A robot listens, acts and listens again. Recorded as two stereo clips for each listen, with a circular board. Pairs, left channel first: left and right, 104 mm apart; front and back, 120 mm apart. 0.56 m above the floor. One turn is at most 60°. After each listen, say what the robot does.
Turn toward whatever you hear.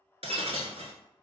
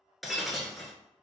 Turn 60° right.
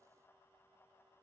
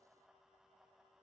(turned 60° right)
Turn 30° right.
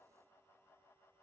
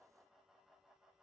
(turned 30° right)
I heard breaking glass from this way, but can't make it out now.